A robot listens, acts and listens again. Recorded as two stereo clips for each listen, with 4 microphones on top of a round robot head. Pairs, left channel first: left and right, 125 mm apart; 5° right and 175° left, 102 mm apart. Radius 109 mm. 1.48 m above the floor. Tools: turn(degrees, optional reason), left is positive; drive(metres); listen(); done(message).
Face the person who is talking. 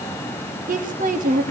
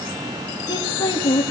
turn(degrees=-65, reason="The woman speaking: 65° right.")
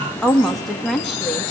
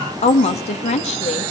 done("Facing the woman speaking, 2 to 4 m away.")